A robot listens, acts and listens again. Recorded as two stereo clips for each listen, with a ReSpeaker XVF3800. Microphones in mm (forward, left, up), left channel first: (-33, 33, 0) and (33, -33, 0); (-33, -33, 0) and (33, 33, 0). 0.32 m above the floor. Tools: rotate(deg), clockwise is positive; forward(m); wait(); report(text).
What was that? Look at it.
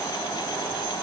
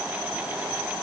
wait()
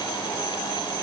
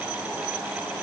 wait()
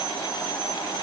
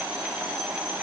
report("I can't make out anything.")